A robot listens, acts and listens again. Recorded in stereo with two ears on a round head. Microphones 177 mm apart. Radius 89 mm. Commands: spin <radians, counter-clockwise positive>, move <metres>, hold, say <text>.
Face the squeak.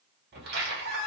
spin -0.87
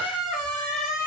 say Facing the squeak, 1 to 2 m away.